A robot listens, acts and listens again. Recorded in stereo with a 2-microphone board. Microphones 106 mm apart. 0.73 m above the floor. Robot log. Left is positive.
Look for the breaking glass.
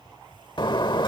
note: The breaking glass: about 50° left or 130° left.
cmd yaw +50
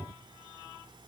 cmd idle
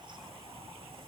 end: I heard breaking glass, but can't make it out now. It was about straight ahead or 80° left.